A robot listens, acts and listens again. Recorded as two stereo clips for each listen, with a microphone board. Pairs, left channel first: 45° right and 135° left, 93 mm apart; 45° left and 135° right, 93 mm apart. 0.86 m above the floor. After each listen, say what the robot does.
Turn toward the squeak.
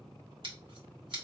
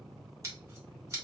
Keep listening.
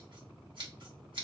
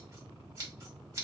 Keep listening.
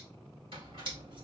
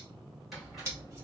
Turn 135° left.
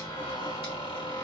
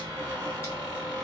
Turn 50° right.
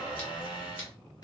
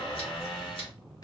Found it: a squeak, straight ahead, 2 to 4 m away.